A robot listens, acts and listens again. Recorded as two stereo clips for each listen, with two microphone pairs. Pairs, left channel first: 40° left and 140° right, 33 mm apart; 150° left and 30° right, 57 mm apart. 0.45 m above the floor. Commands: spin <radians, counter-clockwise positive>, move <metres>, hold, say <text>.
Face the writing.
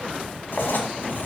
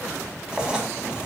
spin 0.79
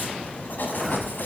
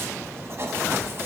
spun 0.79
spin 0.26
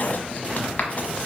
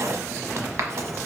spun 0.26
say Found it: writing, straight ahead.